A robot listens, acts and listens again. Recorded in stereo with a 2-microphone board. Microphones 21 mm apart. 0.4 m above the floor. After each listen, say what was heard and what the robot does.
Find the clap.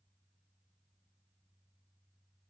Keep listening.
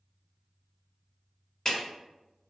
The clap: about 30° left or 150° left. Turn 30° left.
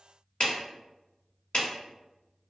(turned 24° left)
So it is at 120° left. Turn 120° left.
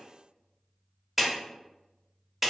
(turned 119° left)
Found it: a clap, straight ahead, 1 to 2 m away.